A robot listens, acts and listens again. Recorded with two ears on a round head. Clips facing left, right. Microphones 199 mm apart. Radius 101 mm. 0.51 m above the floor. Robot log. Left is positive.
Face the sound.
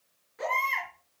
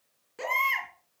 note: The baby crying: about 60° right or 120° right.
cmd yaw -60
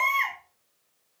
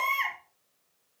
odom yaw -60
end: Facing the baby crying, over 4 m away.